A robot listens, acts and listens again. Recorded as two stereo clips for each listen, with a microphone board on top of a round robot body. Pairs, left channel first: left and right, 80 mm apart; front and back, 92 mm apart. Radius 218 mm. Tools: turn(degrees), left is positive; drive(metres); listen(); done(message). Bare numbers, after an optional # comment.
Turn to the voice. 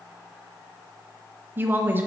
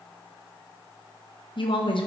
# The woman speaking: 25° right.
turn(-25)
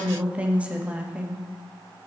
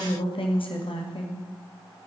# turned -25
# The woman speaking is now 15° right.
turn(-15)
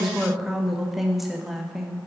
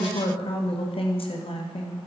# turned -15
done("Found it: a woman speaking, straight ahead, 1 to 2 m away.")